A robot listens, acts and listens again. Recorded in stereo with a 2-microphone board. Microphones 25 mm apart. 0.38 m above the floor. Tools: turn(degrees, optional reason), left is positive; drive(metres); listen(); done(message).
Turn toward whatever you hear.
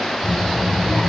turn(degrees=60, reason="The child speaking: about 60° left or 120° left.")
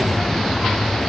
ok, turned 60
done("Facing the child speaking.")